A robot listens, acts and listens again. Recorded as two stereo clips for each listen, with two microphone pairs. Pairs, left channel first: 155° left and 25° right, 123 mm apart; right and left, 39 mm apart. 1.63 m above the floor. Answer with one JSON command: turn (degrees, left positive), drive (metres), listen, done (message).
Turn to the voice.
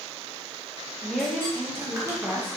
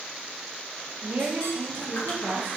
{"turn": 65}
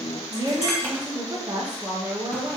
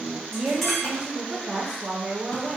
{"turn": 30}
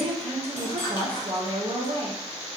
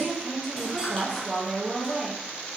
{"done": "Facing the woman speaking."}